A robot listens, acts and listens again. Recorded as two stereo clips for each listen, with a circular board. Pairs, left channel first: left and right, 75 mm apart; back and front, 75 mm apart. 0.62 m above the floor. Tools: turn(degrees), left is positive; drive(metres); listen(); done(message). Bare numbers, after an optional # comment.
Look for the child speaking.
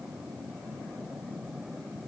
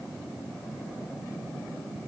listen()
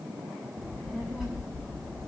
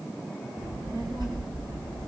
done("Found it: a child speaking, straight ahead, 2 to 4 m away.")